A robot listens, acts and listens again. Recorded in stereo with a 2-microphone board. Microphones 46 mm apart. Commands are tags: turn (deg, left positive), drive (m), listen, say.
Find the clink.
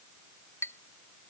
<turn deg="90"/>
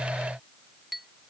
<say>Facing the clink.</say>